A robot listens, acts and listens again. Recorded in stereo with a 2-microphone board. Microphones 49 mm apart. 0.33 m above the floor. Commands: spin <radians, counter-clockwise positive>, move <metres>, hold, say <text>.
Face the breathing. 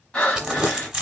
spin 0.44
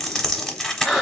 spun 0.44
say Found it: breathing, straight ahead, 1 to 2 m away.